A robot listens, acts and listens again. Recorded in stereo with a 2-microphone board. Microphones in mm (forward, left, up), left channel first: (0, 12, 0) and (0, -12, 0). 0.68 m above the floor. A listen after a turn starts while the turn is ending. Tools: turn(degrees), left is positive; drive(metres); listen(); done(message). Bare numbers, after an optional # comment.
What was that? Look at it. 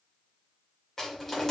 turn(30)
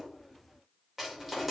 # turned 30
# So it is at 15° right.
turn(-15)
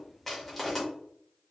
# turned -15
done("Facing the crushing.")